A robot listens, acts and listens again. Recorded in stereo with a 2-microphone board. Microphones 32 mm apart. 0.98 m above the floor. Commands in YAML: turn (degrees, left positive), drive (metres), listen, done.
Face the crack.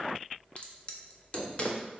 turn: 35
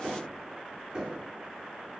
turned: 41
listen: true
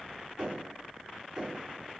done: "I heard a crack, but can't make it out now. It was about 5° right or 105° left."